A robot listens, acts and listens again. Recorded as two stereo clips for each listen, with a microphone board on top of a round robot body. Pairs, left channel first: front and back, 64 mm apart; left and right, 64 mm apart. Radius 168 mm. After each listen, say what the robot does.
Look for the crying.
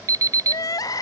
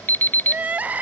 Turn 25° right.
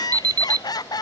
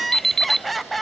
Found it: crying, straight ahead.